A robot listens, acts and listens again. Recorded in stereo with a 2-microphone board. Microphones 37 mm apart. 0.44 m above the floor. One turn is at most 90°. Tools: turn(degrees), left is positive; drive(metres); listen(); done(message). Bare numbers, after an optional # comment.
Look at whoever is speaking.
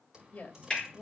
# The woman speaking: about 50° left or 130° left.
turn(50)
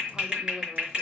listen()
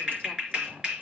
listen()
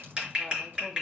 done("I heard a woman speaking, but can't make it out now. It was about straight ahead or 80° left.")